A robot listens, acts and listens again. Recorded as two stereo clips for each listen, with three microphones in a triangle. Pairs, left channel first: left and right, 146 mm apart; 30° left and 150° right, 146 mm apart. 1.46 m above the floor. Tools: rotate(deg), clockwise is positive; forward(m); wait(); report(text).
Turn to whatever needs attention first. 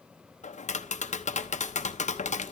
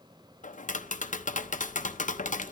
wait()
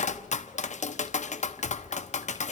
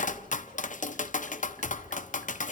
wait()
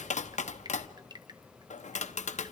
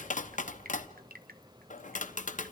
report("I can't make out anything urgent, only dripping and tapping.")